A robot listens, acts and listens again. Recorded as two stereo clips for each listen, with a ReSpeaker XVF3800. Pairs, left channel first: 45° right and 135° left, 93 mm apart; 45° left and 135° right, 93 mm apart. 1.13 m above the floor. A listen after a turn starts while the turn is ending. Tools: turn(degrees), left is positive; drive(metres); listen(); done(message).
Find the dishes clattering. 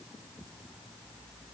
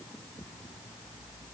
listen()
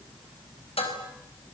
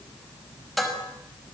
turn(degrees=-45)
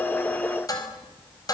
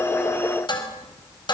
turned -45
done("Facing the dishes clattering.")